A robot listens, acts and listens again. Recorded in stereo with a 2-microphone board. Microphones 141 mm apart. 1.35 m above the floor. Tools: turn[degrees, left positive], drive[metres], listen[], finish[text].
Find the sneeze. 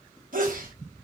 Thought: The sneeze: about 70° right or 110° right.
Action: turn[-70]
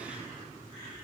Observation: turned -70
Action: listen[]
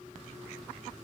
Action: finish[I heard a sneeze, but can't make it out now. It was about straight ahead or 40° right.]